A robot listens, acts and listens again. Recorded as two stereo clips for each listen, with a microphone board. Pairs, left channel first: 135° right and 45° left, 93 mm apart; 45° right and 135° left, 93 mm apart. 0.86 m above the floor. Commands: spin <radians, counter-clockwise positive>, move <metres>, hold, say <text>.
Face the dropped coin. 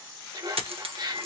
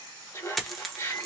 spin 0.79
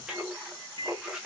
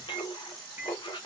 say I heard a dropped coin from this way, but can't make it out now.